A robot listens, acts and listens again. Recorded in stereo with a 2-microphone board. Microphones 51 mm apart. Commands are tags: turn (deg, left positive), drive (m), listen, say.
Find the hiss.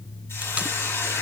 <turn deg="60"/>
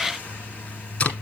<listen/>
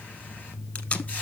<listen/>
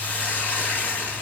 <turn deg="35"/>
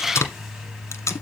<listen/>
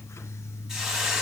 <turn deg="-10"/>
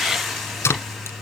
<say>Found it: a hiss, straight ahead.</say>